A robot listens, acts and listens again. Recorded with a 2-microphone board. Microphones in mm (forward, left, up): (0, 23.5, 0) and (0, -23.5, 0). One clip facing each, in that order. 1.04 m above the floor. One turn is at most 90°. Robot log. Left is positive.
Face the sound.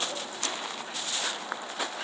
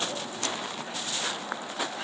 cmd idle
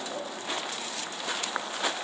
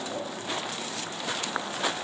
cmd idle
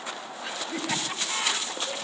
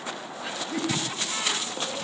cmd yaw +90
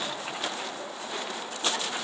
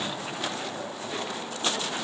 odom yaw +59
note: Nothing new. It was at 30° left.
cmd yaw +30
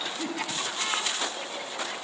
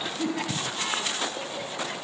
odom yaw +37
note: The laughter is now 15° right.
cmd yaw -15
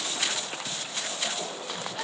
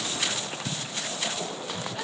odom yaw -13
cmd idle
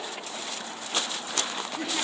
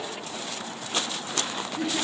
end: Facing the laughter, over 4 m away.